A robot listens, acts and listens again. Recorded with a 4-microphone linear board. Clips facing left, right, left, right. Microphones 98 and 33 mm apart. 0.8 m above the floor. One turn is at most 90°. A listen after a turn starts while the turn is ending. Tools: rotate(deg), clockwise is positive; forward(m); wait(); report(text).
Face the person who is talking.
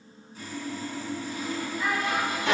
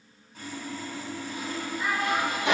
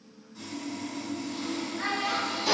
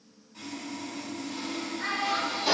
rotate(-90)
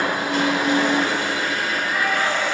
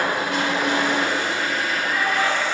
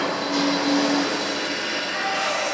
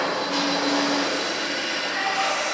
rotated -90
wait()
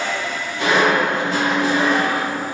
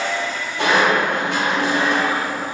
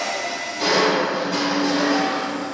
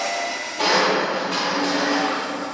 wait()
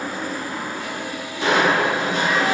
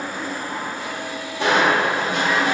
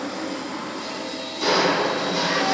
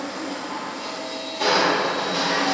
report("I heard a child speaking from this way, but can't make it out now.")